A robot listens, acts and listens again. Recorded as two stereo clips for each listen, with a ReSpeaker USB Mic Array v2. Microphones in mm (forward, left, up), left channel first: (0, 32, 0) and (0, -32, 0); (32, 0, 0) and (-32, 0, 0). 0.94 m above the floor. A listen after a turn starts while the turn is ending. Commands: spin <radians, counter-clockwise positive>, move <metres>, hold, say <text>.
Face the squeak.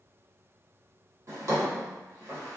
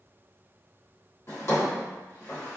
hold
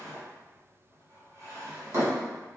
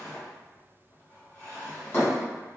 hold
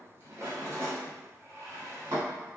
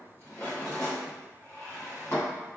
say I can't make out a squeak, only a drawer.